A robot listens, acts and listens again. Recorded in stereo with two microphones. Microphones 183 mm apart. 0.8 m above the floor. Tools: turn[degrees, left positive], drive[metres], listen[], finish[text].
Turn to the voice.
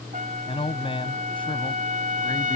Thought: The man speaking: about 30° left or 150° left.
Action: turn[30]
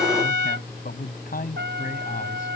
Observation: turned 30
Thought: So it is at 130° left.
Action: turn[130]
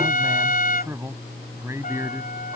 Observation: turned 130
Thought: The man speaking is now 15° right.
Action: turn[-15]
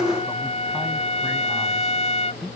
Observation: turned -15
Action: finish[Found it: a man speaking, straight ahead.]